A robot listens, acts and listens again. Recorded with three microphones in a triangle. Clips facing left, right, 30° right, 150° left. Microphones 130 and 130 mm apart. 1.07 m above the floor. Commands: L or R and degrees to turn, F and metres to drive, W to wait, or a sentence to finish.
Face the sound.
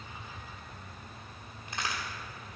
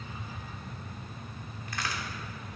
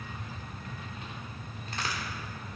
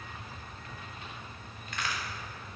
L25
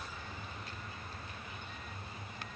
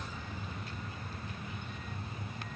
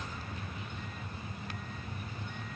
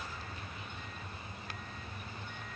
Facing where the crack came from. I can't hear it now.